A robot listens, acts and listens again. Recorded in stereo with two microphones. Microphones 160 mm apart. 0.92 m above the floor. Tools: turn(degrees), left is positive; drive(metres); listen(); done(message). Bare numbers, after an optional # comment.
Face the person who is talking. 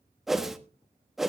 listen()
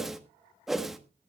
listen()
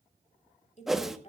# The woman speaking: about 40° left or 140° left.
turn(40)
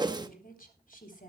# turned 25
# The woman speaking: about 55° left or 125° left.
turn(55)
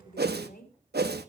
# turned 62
# So it is at 65° left.
turn(65)
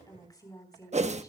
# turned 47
# The woman speaking is now 20° left.
turn(20)
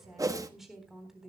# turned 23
done("Facing the woman speaking.")